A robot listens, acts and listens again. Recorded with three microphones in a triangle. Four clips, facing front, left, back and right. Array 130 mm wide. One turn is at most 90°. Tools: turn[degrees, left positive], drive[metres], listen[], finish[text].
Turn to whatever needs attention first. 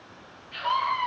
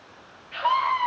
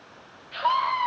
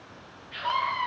Thought: The scream: 140° left.
Action: turn[90]
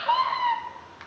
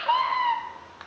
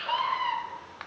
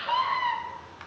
Thought: The scream is now 50° left.
Action: turn[50]
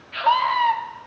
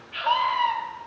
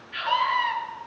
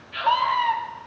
Action: finish[Found it: a scream, straight ahead.]